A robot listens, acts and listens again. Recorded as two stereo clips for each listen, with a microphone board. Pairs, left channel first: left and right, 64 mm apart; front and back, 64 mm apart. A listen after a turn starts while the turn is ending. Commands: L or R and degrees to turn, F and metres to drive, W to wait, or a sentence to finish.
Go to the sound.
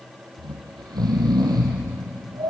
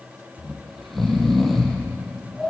R90
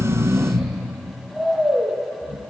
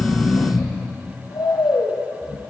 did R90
F1.0
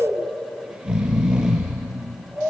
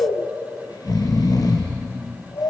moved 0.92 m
R10
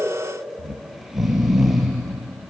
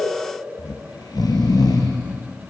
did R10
F1.0
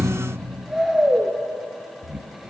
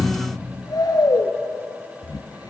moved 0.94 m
F1.0
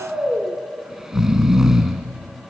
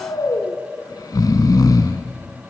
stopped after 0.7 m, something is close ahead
R10
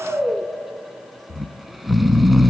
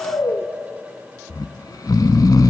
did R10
Arrived at the snoring, straight ahead.